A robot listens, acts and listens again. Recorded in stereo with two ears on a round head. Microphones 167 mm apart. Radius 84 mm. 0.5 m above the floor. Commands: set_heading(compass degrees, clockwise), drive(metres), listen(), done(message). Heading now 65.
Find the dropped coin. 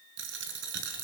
set_heading(130)
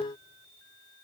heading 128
listen()
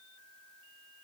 done("I heard a dropped coin, but can't make it out now. It was about straight ahead or 55° right.")